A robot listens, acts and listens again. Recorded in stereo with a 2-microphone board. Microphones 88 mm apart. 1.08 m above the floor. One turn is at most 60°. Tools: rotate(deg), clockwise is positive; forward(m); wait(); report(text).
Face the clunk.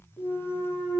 rotate(-30)
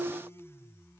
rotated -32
wait()
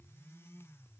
report("I heard a clunk, but can't make it out now. It was about 20° right or 135° left.")